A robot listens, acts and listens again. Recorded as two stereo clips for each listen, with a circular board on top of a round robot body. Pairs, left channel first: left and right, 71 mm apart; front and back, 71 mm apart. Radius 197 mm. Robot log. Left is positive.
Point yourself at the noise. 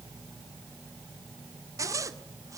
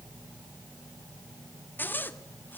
note: The zipper: 60° right.
cmd yaw -60
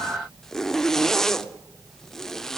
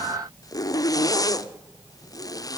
note: The zipper is now 10° left.
cmd yaw +10
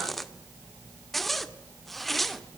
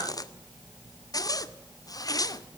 end: Found it: a zipper, straight ahead, 2 to 4 m away.